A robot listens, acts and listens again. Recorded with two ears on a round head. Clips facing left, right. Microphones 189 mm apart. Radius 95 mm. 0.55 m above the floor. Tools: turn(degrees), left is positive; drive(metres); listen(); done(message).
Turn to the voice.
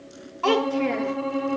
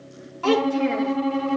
turn(degrees=-30)
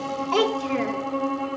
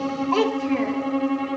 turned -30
turn(degrees=20)
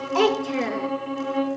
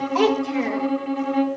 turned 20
done("Facing the child speaking.")